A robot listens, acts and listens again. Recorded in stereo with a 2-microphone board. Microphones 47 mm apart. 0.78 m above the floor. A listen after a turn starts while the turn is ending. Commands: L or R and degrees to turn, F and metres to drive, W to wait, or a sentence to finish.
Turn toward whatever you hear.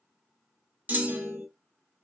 R35
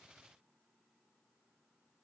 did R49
W
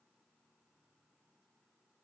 I heard a clunk, but can't make it out now. It was about 15° left or 95° right.